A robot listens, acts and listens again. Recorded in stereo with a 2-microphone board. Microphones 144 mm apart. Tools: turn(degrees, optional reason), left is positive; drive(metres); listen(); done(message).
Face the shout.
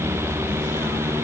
listen()
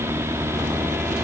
listen()
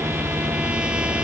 done("I can't make out a shout.")